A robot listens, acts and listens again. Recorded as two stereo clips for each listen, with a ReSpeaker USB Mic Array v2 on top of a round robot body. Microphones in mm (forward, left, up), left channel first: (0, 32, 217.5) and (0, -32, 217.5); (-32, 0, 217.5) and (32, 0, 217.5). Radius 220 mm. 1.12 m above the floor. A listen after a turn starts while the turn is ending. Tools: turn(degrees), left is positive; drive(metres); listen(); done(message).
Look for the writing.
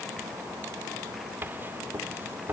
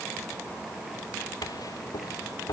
turn(degrees=-150)
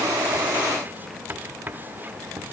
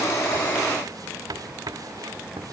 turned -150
turn(degrees=-30)
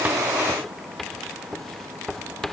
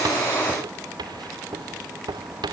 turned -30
done("Found it: writing, straight ahead.")